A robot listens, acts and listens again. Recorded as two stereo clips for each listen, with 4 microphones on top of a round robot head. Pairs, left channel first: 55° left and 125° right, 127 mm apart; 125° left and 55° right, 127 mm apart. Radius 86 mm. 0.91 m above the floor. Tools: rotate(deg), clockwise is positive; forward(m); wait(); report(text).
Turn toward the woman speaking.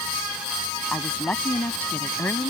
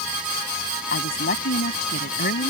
rotate(-130)
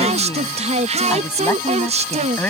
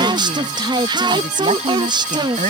rotate(25)
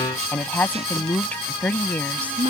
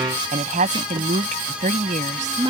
rotate(25)
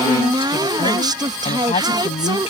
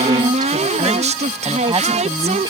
report("Found it: a woman speaking, straight ahead.")